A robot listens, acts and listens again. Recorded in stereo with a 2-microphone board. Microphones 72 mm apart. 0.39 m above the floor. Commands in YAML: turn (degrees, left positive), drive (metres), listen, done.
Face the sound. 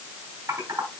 turn: -55
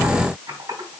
turn: -65
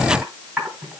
turn: -15
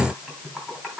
done: "Found it: typing on a keyboard, straight ahead, 2 to 4 m away."